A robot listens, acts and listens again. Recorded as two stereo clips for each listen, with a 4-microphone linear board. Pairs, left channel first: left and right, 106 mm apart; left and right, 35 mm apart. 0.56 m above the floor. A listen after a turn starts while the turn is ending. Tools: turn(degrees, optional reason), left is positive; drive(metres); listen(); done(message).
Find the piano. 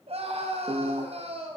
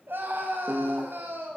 turn(degrees=-50, reason="The piano: about 50° right or 130° right.")
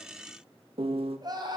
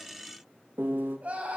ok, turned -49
turn(degrees=-80, reason="So it is at 80° right.")
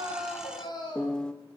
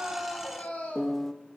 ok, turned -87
turn(degrees=10, reason="The piano is now 10° left.")
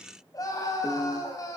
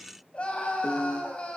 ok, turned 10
done("Facing the piano, under 1 m away.")